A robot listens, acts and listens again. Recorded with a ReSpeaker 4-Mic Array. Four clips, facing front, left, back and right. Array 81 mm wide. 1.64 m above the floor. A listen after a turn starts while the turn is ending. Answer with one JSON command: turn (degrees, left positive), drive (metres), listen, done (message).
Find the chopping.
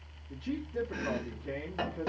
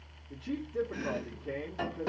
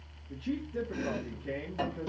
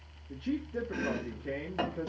{"turn": -65}
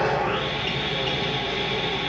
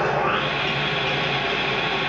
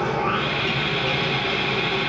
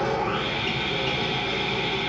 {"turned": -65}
{"listen": true}
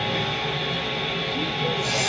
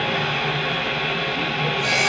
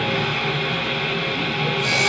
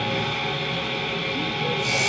{"listen": true}
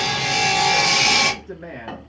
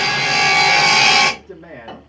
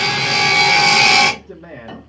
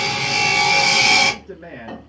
{"done": "I heard chopping from this way, but can't make it out now."}